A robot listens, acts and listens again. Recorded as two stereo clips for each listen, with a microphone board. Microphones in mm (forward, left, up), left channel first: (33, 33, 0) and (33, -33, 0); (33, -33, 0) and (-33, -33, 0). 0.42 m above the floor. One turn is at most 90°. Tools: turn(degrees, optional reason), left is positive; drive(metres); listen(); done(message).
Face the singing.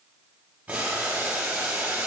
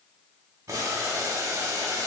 listen()
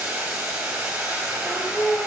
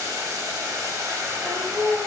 turn(degrees=20, reason="The singing: 20° left.")
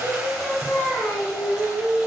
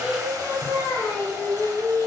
turn(degrees=30, reason="The singing is now 30° left.")
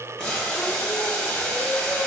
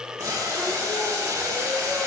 listen()
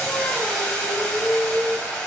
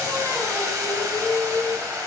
turn(degrees=10, reason="The singing is now 10° left.")
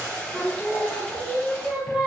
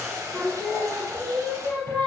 done("Found it: singing, straight ahead, 2 to 4 m away.")